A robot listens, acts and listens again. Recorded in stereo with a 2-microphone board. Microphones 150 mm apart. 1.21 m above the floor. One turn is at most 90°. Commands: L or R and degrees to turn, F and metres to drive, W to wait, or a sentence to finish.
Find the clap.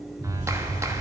R20
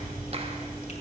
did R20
R90
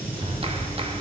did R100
R40
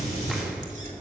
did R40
W
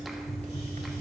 W
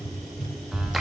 Facing the clap.